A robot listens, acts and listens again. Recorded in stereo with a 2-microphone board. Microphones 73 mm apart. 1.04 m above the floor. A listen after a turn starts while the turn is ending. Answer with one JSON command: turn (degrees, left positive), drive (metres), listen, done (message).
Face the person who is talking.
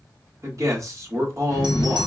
{"turn": -45}
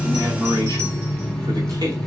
{"turn": -90}
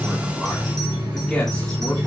{"listen": true}
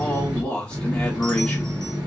{"turn": 10}
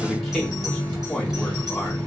{"done": "Facing the man speaking."}